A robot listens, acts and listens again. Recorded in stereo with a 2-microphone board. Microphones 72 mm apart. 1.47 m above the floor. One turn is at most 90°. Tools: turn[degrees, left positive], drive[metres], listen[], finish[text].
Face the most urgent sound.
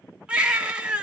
Action: turn[-30]
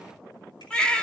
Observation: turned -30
Thought: So it is at 15° left.
Action: turn[15]
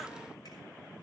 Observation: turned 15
Action: listen[]
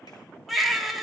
Action: finish[Found it: a baby crying, straight ahead.]